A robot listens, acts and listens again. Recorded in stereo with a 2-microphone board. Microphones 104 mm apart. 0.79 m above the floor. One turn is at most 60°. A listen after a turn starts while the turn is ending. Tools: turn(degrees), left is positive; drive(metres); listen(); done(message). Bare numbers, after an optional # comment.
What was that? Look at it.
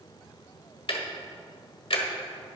# The ticking: about 60° left or 120° left.
turn(60)
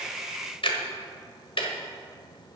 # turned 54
# So it is at 65° left.
turn(60)
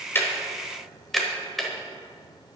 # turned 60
done("Facing the ticking.")